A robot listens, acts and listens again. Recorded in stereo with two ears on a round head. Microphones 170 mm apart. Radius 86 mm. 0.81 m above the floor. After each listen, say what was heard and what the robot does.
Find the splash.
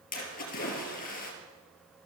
The splash: about 45° left or 135° left. Turn 45° left.
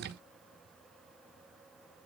Keep listening.
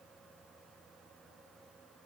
I heard a splash, but can't make it out now. It was about straight ahead or 90° left.